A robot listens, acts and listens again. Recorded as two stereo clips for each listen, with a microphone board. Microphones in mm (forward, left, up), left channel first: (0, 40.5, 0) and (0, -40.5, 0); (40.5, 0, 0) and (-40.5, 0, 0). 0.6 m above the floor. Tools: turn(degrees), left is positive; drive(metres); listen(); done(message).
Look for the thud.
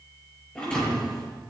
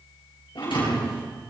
turn(degrees=10)
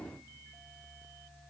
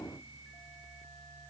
done("Facing where the thud came from. I can't hear it now.")